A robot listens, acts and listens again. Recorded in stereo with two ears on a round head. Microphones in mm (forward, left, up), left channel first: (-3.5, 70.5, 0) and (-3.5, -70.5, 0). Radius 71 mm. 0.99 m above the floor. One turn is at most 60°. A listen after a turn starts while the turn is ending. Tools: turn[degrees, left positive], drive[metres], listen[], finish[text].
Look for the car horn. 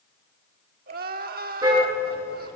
Thought: The car horn: about 20° right or 160° right.
Action: turn[-20]
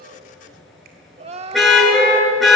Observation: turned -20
Action: finish[Facing the car horn, over 4 m away.]